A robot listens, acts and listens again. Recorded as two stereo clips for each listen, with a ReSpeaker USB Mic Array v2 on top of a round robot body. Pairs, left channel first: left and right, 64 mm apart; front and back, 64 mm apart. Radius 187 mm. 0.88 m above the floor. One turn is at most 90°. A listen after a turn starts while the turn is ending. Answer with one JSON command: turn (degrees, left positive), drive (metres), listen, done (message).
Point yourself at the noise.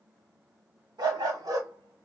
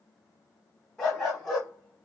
{"turn": -85}
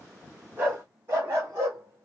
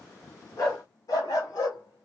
{"turn": -40}
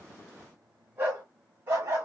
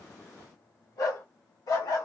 {"turn": -40}
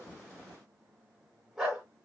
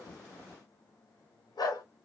{"done": "Facing the dog barking."}